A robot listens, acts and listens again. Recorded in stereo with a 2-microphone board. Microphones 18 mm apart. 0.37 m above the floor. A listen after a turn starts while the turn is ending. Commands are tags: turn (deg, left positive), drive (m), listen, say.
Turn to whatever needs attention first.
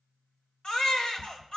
<turn deg="55"/>
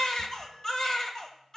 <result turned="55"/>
<turn deg="40"/>
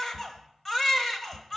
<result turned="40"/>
<turn deg="20"/>
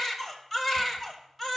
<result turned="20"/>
<turn deg="10"/>
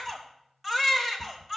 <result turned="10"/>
<say>Facing the baby crying.</say>